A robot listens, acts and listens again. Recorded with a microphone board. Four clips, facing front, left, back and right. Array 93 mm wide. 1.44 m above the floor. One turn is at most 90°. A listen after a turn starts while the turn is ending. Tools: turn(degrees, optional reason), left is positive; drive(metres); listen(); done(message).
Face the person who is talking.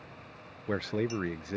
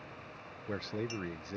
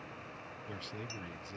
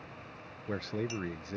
done("Facing the man speaking.")